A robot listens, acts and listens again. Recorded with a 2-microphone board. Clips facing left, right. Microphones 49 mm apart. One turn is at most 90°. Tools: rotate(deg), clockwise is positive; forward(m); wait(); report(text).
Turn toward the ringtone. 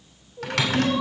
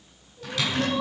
wait()
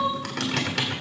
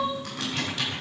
wait()
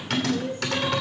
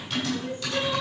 report("I can't make out a ringtone, only crying and typing on a keyboard.")